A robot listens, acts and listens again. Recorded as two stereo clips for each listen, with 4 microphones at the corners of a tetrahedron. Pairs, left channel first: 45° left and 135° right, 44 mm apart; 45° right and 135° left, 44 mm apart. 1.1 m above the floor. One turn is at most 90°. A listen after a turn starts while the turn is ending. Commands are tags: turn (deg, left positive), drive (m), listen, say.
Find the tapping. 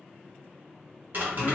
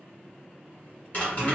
<turn deg="-90"/>
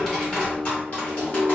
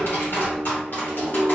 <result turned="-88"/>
<say>Found it: tapping, straight ahead, 1 to 2 m away.</say>